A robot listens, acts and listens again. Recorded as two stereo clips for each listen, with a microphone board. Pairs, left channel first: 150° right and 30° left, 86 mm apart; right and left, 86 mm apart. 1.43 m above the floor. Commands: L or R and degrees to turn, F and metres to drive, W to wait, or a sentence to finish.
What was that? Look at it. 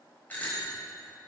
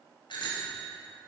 R80
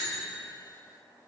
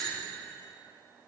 Facing the bicycle bell.